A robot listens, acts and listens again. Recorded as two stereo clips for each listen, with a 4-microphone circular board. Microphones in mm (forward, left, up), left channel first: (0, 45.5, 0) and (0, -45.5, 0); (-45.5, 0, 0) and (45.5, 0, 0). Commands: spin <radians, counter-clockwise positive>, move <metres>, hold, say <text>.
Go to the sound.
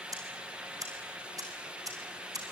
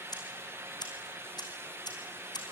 spin -2.44
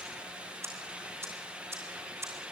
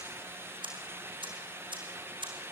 spin -0.52
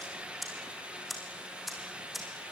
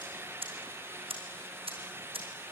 move 1.0
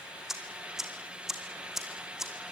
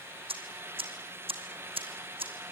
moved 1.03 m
move 1.0
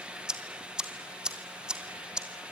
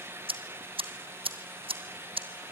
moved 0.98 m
spin -0.17
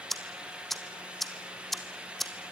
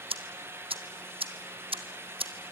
move 1.0
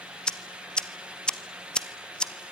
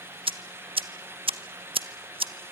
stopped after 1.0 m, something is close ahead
spin 0.17
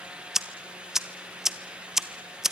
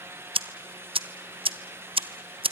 say Arrived at the ticking, straight ahead.